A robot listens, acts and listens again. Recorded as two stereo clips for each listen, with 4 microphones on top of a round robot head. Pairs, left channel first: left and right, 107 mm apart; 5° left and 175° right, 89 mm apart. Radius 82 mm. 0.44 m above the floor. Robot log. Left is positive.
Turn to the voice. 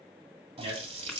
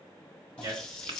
note: The man speaking: 120° right.
cmd yaw -120
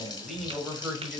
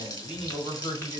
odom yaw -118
end: Facing the man speaking.